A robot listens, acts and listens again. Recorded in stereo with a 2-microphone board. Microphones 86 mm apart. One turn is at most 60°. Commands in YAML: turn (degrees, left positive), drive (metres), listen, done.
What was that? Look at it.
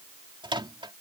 turn: -60
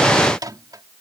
turn: -45
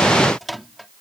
done: "Found it: a microwave, straight ahead."